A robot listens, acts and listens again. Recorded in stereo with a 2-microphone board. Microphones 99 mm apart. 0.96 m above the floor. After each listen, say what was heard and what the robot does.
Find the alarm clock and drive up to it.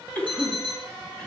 The alarm clock: about 70° left or 110° left. Turn 70° left.
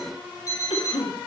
So it is at 40° left. Turn 40° left.
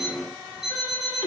Drive 1.0 m forward.
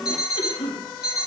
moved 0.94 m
Drive 1.0 m forward.
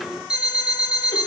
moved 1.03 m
The alarm clock is now 10° right. Turn 10° right.
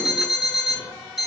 Drive 1.0 m forward.
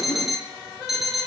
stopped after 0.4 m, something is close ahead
I am next to the alarm clock.